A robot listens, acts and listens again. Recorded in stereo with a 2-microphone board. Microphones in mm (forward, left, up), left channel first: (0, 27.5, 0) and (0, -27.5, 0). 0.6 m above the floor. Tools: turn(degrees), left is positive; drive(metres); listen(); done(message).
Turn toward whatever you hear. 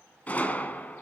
turn(degrees=30)
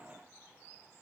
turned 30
listen()
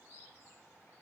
done("I heard a gunshot, but can't make it out now. It was about straight ahead or 120° left.")